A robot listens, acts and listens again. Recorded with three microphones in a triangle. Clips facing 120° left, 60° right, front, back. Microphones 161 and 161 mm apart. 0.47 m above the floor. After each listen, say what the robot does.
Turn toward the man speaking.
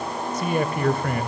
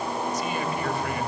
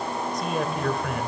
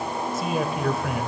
Turn 95° left.
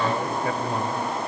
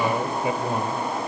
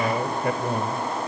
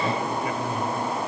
Turn 10° left.
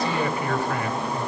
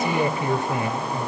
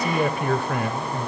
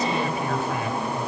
Found it: a man speaking, straight ahead.